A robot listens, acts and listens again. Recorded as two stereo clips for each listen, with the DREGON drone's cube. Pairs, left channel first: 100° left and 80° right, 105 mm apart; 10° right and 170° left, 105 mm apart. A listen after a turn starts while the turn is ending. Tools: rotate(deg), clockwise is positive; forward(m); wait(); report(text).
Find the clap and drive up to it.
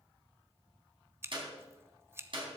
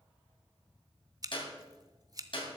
rotate(45)
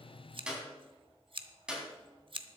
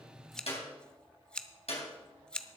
forward(1.0)
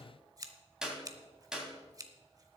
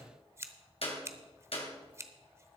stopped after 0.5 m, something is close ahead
report("Blocked. The clap is further on, straight ahead.")